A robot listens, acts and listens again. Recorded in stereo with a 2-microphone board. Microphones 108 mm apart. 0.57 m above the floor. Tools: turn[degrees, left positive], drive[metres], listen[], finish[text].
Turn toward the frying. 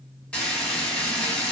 Action: turn[30]
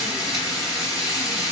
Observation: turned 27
Thought: So it is at 140° left.
Action: turn[140]
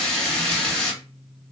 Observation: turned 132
Thought: The frying is now 10° left.
Action: turn[10]
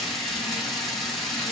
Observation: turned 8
Action: finish[Facing the frying, 1 to 2 m away.]